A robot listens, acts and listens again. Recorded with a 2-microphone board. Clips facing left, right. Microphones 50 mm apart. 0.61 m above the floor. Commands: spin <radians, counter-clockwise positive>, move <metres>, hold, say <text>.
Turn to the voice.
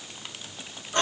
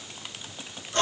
hold
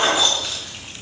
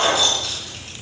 hold
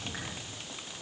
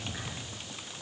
say I can't make out anyone speaking to turn to.